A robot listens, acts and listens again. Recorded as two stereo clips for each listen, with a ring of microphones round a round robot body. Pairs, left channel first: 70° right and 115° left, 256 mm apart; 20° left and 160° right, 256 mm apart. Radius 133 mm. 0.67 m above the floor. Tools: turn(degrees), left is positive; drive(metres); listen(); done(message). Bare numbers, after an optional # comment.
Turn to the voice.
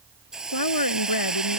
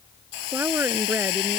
# The woman speaking: 75° right.
turn(-75)
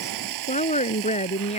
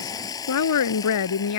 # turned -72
done("Facing the woman speaking.")